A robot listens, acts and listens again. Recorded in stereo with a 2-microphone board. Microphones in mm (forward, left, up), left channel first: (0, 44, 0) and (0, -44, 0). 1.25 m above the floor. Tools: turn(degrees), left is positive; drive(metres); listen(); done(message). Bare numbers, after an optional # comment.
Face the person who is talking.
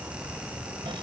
listen()
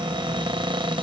listen()
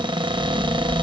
# The child speaking: about 35° left or 145° left.
turn(35)
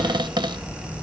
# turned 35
# So it is at 110° left.
turn(110)
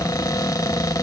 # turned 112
listen()
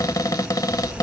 done("Facing the child speaking, over 4 m away.")